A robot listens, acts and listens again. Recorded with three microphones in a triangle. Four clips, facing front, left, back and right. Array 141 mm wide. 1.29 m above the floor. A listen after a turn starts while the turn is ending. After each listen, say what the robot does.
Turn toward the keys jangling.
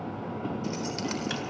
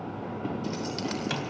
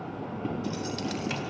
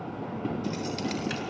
Turn 30° left.
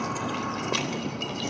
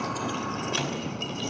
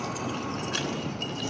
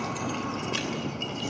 Found it: keys jangling, straight ahead.